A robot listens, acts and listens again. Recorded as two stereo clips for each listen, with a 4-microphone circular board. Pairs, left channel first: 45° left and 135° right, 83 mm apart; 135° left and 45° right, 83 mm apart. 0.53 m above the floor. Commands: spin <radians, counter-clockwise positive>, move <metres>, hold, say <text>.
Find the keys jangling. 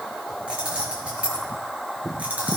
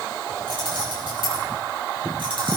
spin -1.05
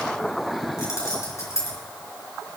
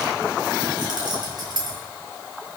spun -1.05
spin -0.17
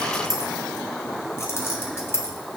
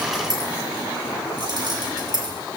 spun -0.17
spin -0.26
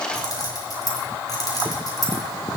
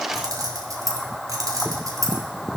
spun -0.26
say Found it: keys jangling, straight ahead, 2 to 4 m away.